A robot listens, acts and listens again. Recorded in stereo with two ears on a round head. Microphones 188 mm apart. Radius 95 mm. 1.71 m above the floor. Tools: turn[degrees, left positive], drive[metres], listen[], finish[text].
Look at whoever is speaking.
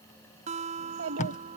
Thought: The child speaking: about 65° right or 115° right.
Action: turn[-65]
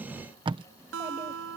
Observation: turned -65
Action: listen[]
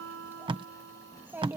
Thought: So it is at 10° right.
Action: turn[-10]
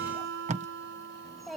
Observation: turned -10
Action: finish[Facing the child speaking.]